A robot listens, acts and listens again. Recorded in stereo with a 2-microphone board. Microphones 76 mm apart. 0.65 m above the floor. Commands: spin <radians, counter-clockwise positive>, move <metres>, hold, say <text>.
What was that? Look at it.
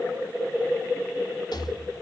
spin 1.22
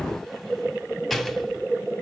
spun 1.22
say Found it: a rattle, straight ahead.